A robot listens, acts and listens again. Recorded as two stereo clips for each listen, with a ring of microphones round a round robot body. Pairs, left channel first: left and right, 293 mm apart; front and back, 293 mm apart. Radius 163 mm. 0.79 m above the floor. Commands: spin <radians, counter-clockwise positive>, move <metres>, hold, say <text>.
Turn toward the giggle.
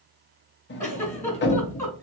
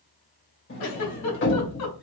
spin 0.17
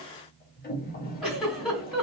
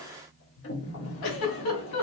say Found it: a giggle, straight ahead, 1 to 2 m away.